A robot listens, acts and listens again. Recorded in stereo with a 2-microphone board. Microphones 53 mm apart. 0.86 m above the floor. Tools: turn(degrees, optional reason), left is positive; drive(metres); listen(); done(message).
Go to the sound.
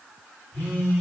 turn(degrees=30, reason="The phone buzzing: about 30° left or 150° left.")
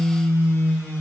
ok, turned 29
turn(degrees=120, reason="So it is at 120° left.")
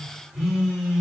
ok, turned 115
drive(metres=1.0)
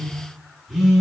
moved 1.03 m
drive(metres=1.0)
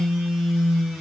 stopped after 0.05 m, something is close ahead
done("I am next to the phone buzzing.")